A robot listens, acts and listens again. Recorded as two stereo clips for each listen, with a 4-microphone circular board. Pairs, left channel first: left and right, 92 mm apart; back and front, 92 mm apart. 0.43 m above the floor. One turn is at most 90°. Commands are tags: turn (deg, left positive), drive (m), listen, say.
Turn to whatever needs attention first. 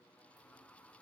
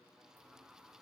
<listen/>
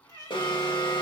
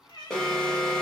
<turn deg="90"/>
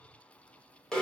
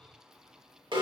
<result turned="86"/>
<turn deg="10"/>
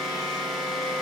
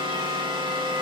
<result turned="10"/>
<say>Found it: an alarm, straight ahead.</say>